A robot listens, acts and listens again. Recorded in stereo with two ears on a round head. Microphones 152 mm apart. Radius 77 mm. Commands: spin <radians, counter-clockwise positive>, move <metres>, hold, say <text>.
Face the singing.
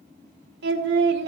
spin -1.31
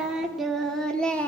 spin 0.17
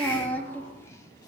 spin 0.17
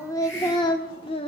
spin 0.61
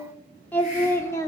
spin 0.26
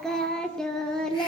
say Found it: singing, straight ahead.